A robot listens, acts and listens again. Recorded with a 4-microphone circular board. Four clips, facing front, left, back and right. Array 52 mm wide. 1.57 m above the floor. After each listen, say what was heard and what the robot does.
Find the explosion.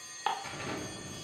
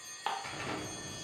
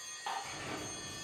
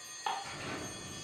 The explosion: 50° left. Turn 50° left.
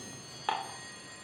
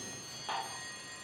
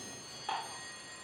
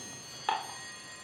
Facing where the explosion came from. I can't hear it now.